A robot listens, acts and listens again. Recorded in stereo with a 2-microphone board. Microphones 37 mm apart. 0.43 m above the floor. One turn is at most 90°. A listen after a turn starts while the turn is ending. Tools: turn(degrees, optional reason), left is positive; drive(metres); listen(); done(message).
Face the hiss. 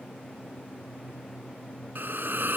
turn(degrees=-90)
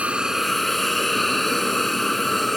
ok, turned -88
done("Found it: a hiss, straight ahead.")